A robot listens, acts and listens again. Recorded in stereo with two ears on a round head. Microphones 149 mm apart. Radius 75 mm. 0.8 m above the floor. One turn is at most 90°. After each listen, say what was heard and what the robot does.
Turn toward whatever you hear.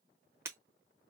The breaking glass: about 15° right or 165° right. Turn 15° right.
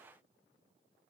Keep listening.
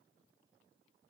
I heard breaking glass, but can't make it out now. It was about straight ahead or 150° right.